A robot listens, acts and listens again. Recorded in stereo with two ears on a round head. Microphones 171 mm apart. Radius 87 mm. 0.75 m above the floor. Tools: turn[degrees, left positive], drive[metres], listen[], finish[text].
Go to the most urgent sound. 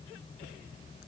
Action: listen[]
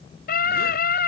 Thought: The scream: about 50° left or 130° left.
Action: turn[50]
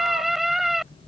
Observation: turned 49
Action: drive[1.0]
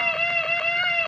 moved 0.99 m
Action: drive[1.0]
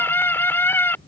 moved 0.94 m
Thought: The scream is now 10° left.
Action: turn[10]
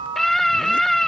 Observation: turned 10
Action: drive[1.0]
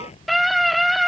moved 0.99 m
Action: drive[1.0]
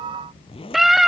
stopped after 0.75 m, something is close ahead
Action: finish[I am next to the scream.]